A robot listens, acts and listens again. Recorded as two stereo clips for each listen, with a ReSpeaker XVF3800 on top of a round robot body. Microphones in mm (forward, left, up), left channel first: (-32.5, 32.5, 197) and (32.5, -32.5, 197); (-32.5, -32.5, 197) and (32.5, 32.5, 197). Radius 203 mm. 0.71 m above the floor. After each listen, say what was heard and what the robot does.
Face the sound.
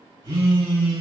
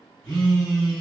The phone buzzing: 90° right. Turn 90° right.
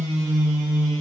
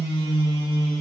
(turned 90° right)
The phone buzzing is now 10° left. Turn 10° left.
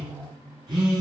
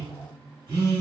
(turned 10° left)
Facing the phone buzzing.